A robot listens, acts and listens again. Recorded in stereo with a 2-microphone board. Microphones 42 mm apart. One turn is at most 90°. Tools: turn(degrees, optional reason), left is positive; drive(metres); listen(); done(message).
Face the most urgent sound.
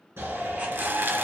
turn(degrees=-70, reason="The shout: about 70° right or 110° right.")
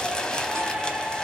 turn(degrees=-30, reason="So it is at 30° right.")
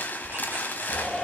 done("Found it: a shout, straight ahead.")